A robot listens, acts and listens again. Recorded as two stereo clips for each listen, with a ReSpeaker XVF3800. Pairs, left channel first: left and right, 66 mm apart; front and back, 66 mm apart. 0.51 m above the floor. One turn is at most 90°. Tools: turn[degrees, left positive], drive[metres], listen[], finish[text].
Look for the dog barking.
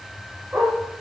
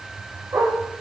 Thought: The dog barking: 150° right.
Action: turn[-90]
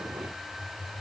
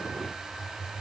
Thought: Nothing new. It was at 60° right.
Action: turn[-60]
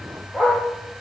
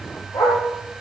Thought: The dog barking is now 20° left.
Action: turn[20]
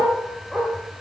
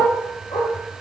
Action: finish[Facing the dog barking, over 4 m away.]